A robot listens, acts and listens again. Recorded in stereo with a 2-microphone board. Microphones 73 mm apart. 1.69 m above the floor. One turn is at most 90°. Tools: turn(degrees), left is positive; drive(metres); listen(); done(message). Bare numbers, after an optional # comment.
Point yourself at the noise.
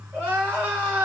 # The crying: about 25° right or 155° right.
turn(-25)
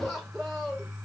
done("Facing the crying, 2 to 4 m away.")